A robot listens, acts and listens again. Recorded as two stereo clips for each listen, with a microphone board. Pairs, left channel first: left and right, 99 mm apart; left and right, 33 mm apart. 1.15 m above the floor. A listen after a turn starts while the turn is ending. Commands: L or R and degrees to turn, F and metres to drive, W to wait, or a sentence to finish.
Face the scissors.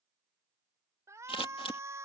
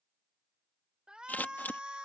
L65
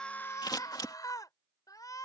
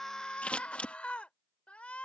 L45
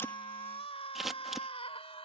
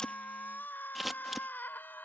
Facing the scissors.